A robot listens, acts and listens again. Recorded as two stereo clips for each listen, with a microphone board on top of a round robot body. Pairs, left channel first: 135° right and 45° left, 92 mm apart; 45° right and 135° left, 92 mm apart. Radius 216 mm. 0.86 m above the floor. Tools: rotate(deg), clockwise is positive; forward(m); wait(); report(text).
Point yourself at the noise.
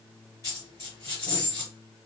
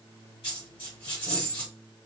rotate(80)
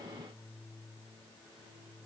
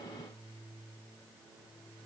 report("Facing where the dropped coin came from. I can't hear it now.")